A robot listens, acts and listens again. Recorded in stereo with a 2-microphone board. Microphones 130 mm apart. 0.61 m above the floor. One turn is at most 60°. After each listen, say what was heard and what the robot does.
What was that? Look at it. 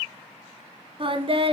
The singing: about 45° right or 135° right. Turn 45° right.
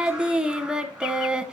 Facing the singing.